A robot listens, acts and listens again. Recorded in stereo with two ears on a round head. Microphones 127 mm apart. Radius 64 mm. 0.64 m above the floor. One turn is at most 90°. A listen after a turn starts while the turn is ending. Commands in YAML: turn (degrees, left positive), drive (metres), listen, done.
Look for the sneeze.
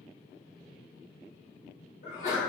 turn: 55
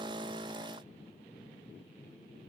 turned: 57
listen: true
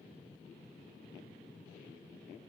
done: "I heard a sneeze, but can't make it out now. It was about 5° right or 70° left."